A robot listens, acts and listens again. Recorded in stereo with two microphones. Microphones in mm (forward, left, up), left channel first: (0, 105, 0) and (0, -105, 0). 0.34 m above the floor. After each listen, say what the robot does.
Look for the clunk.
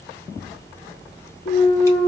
Turn 45° left.
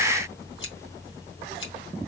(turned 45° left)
Keep listening.
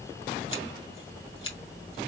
I heard a clunk, but can't make it out now. It was about straight ahead or 90° left.